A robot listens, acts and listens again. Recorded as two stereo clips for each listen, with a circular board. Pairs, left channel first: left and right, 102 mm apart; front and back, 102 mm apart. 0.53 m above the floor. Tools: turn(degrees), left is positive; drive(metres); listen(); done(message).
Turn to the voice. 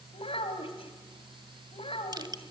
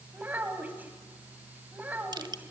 turn(degrees=110)
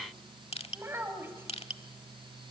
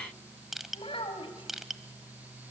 turn(degrees=-25)
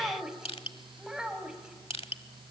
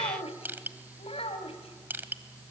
done("Facing the child speaking, 2 to 4 m away.")